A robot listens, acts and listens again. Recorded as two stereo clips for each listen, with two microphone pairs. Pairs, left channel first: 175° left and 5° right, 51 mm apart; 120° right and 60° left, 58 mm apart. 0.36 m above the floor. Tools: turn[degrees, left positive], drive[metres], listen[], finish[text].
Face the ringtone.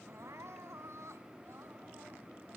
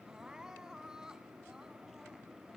Action: listen[]
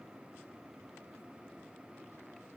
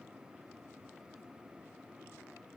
Action: listen[]
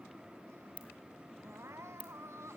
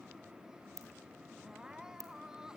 Thought: The ringtone: 55° left.
Action: turn[55]
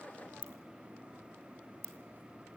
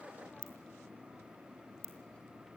Thought: The ringtone is now 25° left.
Action: turn[25]
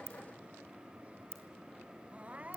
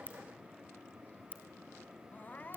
Thought: The ringtone is now 10° left.
Action: turn[10]
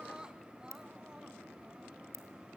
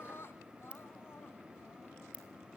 Action: finish[Facing the ringtone, 2 to 4 m away.]